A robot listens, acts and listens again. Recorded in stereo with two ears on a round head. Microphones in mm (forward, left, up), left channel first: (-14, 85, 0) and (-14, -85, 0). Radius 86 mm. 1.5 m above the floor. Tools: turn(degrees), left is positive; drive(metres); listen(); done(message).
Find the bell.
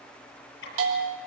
turn(degrees=-75)
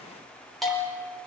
done("Found it: a bell, straight ahead.")